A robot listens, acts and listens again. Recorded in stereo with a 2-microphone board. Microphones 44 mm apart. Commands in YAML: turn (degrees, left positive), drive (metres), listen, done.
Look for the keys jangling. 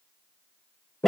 listen: true
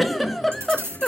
turn: -90
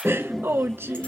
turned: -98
turn: 10
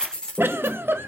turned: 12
turn: 20
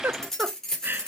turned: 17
turn: 15
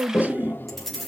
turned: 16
done: "Found it: keys jangling, straight ahead, 2 to 4 m away."